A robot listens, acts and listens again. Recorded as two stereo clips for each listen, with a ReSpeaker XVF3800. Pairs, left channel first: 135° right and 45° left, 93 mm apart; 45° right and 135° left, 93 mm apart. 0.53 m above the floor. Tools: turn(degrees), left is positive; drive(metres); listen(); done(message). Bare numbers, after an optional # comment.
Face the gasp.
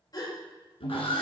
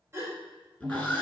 # The gasp: 170° right.
turn(-170)
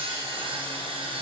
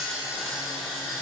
done("Facing where the gasp came from. I can't hear it now.")